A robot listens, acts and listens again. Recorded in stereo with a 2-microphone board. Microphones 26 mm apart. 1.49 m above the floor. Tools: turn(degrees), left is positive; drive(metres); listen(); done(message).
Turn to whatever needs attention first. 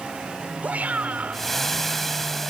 turn(degrees=-90)
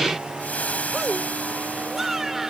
turn(degrees=-10)
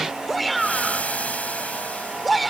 done("Facing the shout.")